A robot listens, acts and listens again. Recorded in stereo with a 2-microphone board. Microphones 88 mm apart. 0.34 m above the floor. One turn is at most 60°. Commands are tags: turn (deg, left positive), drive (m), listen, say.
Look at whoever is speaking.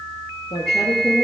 <turn deg="60"/>
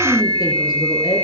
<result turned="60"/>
<turn deg="55"/>
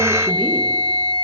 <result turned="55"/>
<listen/>
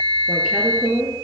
<turn deg="-10"/>
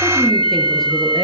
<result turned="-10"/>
<listen/>
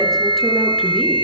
<listen/>
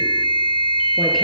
<say>I heard a woman speaking from this way, but can't make it out now.</say>